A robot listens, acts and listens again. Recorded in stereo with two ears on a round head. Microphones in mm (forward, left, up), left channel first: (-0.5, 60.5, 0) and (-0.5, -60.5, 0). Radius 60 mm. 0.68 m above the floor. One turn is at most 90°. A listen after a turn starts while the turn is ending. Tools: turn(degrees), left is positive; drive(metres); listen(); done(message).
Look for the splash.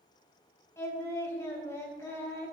listen()
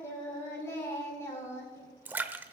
turn(degrees=-30)
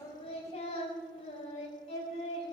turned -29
listen()
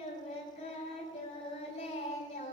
done("I heard a splash, but can't make it out now. It was about 15° left or 135° right.")